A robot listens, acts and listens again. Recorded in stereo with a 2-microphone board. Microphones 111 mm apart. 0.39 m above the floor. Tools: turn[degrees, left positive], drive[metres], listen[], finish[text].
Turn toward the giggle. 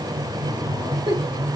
Thought: The giggle: about 50° right or 130° right.
Action: turn[-50]
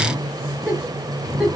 Thought: So it is at 10° right.
Action: turn[-10]
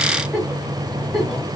Action: finish[Facing the giggle, 1 to 2 m away.]